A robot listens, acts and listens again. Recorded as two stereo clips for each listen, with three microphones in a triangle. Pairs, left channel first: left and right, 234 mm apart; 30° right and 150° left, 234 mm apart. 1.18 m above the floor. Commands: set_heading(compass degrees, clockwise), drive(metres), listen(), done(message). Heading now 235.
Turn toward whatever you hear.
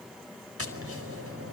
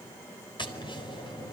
set_heading(335)
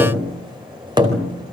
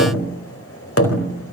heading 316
set_heading(336)
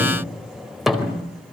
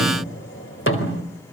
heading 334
done("Found it: tapping, straight ahead.")